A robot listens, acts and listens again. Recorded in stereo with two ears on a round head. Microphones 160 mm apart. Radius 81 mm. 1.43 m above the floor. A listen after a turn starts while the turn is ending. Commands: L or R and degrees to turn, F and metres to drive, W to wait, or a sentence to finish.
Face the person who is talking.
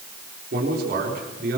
R60
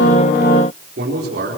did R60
R60
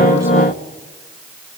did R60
W
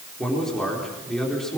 Facing the man speaking.